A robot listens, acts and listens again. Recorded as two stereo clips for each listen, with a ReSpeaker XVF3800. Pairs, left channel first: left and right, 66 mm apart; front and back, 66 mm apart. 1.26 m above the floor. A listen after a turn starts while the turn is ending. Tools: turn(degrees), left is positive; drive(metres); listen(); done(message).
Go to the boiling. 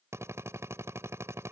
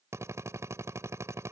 listen()
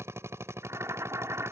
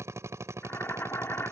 turn(degrees=-50)
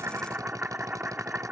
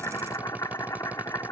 turn(degrees=-25)
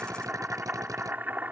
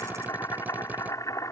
turn(degrees=-30)
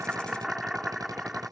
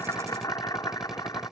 turn(degrees=-10)
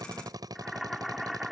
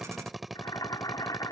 drive(metres=1.0)
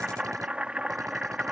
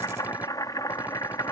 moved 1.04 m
turn(degrees=-15)
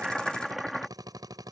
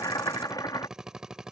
drive(metres=1.0)
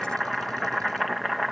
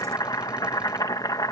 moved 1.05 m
drive(metres=1.0)
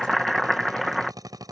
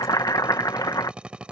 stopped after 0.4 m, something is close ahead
done("Arrived at the boiling, straight ahead.")